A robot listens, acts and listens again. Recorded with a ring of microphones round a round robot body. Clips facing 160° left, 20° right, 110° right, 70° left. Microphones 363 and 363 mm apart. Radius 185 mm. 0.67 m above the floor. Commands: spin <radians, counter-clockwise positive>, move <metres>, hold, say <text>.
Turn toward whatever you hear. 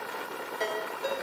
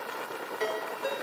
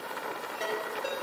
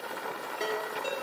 spin 2.53
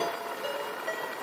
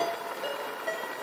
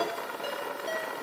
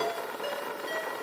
say Facing the ringtone, over 4 m away.